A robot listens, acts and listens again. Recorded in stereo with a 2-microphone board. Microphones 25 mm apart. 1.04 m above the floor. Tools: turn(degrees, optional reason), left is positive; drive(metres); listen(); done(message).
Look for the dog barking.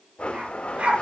turn(degrees=-55, reason="The dog barking: about 55° right or 125° right.")
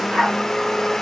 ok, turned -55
turn(degrees=-65, reason="So it is at 65° right.")
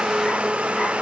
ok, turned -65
listen()
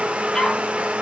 turn(degrees=30, reason="The dog barking is now 30° left.")
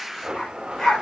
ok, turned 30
turn(degrees=10, reason="The dog barking is now 10° left.")
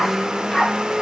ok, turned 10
done("Found it: a dog barking, straight ahead.")